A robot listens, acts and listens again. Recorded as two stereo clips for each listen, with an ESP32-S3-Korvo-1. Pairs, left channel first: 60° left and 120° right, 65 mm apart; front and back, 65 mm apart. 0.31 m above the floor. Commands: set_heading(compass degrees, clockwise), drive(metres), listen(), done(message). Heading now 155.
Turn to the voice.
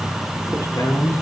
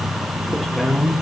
set_heading(70)
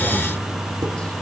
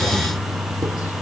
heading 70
listen()
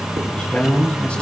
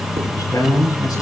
set_heading(80)
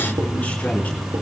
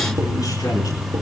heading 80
done("Found it: a man speaking, straight ahead, over 4 m away.")